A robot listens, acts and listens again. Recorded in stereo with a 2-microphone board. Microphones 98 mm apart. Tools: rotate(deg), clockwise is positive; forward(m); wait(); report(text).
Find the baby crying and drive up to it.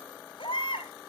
rotate(-60)
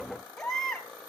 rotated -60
forward(1.0)
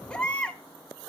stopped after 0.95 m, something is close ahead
rotate(-10)
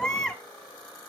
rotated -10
report("I am next to the baby crying.")